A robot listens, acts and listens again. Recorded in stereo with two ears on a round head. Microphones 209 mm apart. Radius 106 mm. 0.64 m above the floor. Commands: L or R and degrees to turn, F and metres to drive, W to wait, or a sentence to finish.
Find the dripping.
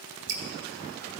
R55
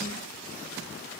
W
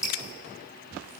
Facing the dripping.